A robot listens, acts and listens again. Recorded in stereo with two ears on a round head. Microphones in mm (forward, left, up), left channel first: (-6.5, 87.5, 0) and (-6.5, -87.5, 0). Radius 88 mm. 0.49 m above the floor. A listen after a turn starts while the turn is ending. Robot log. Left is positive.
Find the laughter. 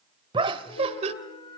note: The laughter: about 35° right or 145° right.
cmd yaw -35
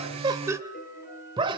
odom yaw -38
note: The laughter: about 25° right or 155° right.
cmd yaw -25
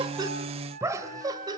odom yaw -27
note: The laughter: about 20° right or 160° right.
cmd yaw -20
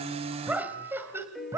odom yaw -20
note: So it is at 15° right.
cmd yaw -15
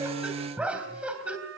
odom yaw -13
end: Found it: laughter, straight ahead.